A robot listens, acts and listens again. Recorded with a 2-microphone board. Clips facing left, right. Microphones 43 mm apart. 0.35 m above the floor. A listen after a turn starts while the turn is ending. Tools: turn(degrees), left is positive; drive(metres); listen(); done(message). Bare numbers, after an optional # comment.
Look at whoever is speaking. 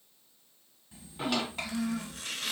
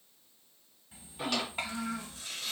# The child speaking: about 20° right or 160° right.
turn(-20)
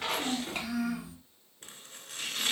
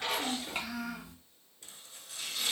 done("Facing the child speaking, 1 to 2 m away.")